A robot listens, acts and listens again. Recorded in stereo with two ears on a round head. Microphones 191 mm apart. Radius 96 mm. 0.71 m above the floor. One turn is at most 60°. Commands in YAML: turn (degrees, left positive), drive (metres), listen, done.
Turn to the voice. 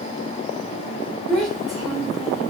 turn: 30
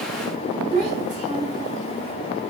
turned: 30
turn: -35
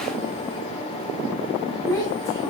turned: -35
turn: 15
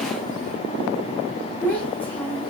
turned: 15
done: "Facing the child speaking."